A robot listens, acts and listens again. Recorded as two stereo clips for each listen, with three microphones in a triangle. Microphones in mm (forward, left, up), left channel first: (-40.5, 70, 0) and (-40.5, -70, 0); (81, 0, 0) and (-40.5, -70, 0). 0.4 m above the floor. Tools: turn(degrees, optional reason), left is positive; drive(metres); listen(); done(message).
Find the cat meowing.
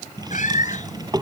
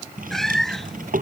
turn(degrees=115, reason="The cat meowing: 115° left.")
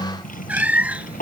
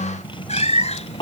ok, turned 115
turn(degrees=-10, reason="The cat meowing is now 10° right.")
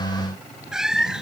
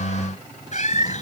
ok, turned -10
done("Found it: a cat meowing, straight ahead.")